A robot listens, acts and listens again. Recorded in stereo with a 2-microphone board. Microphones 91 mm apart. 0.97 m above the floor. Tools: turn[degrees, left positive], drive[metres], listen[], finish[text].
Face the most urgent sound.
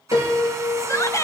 Thought: The shout: about 35° left or 145° left.
Action: turn[35]
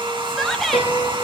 Action: finish[Facing the shout, under 1 m away.]